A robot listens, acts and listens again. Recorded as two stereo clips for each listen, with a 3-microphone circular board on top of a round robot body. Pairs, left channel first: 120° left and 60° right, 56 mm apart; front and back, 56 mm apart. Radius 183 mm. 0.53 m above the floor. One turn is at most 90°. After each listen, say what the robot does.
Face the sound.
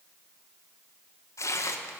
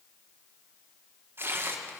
Turn 90° left.
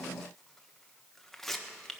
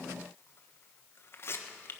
Turn 35° left.
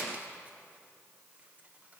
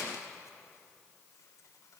Keep listening.
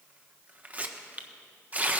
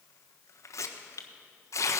Found it: tearing paper, straight ahead.